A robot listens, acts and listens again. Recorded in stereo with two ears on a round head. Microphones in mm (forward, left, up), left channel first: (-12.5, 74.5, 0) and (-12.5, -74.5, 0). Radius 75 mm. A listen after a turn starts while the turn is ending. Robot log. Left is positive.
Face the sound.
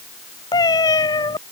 note: The cat meowing: about 25° left or 155° left.
cmd yaw +25
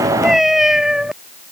end: Facing the cat meowing.